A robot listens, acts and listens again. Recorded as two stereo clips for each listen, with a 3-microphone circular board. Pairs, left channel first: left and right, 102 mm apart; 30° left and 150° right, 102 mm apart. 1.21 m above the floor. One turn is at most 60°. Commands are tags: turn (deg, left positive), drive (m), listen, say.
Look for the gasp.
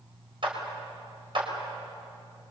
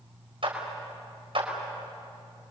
<listen/>
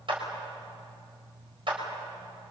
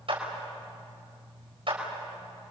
<listen/>
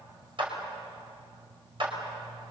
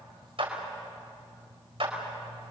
<say>I can't make out a gasp to turn to.</say>